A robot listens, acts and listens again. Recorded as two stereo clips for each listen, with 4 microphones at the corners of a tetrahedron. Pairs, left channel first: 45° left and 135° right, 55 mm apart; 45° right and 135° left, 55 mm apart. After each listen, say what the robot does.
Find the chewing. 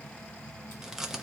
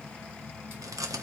Turn 145° left.
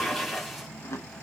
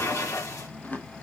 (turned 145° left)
Turn 15° left.
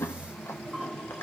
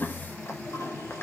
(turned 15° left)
Found it: chewing, straight ahead.